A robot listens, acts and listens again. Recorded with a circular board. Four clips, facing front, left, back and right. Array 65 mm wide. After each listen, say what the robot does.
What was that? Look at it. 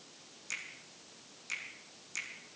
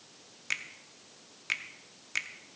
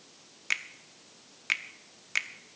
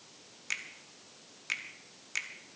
Turn 170° left.
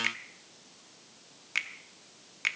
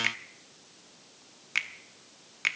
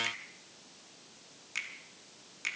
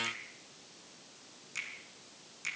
Turn 60° left.
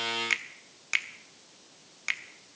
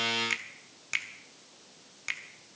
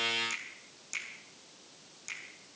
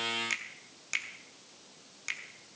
Turn 10° left.
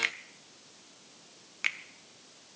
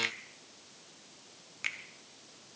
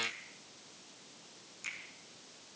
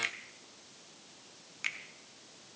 Facing the finger snap, under 1 m away.